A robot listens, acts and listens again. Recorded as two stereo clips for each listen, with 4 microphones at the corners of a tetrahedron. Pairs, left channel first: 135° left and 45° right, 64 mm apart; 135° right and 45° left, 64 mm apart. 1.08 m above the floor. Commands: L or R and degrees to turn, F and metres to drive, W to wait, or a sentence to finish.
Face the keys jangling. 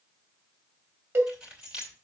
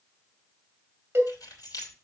R120
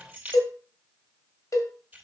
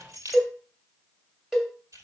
L20
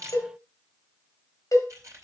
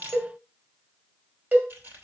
Found it: keys jangling, straight ahead, 2 to 4 m away.